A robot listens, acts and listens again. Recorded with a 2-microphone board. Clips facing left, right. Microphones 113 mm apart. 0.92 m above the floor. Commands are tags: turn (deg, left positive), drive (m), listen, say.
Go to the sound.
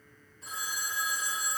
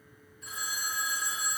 <turn deg="35"/>
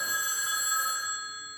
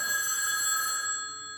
<turn deg="110"/>
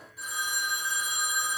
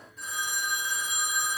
<turn deg="10"/>
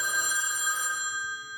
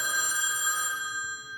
<drive m="1.0"/>
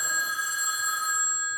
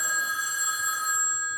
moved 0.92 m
<drive m="1.0"/>
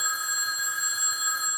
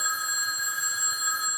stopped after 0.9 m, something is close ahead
<say>I am next to the phone ringing.</say>